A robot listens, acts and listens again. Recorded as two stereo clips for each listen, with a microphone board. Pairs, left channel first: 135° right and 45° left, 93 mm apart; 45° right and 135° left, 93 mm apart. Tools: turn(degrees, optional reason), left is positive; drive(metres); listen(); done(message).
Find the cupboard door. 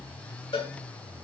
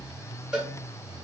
listen()
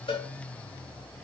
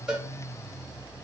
listen()
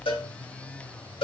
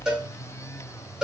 done("I can't make out a cupboard door to turn to.")